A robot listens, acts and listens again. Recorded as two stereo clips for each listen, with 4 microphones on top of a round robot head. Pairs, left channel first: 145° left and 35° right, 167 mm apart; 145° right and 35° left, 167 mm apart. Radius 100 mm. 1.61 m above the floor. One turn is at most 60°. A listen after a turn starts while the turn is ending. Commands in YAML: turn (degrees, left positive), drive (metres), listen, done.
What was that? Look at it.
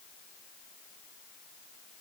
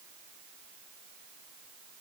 listen: true
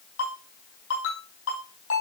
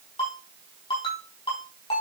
turn: 60
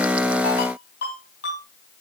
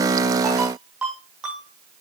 turn: 60
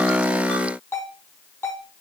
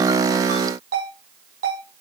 turn: 60
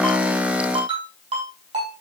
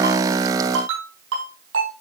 turn: 25
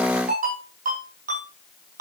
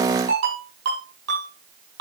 turn: 10
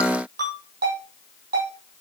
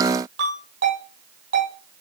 turn: 10
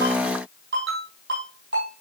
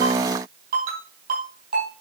done: "Found it: a ringtone, straight ahead, over 4 m away."